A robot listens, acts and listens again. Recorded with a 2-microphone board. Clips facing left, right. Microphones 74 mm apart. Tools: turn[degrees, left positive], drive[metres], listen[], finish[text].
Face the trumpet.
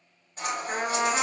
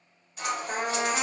Action: turn[90]
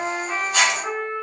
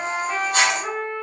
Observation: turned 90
Action: finish[Facing the trumpet.]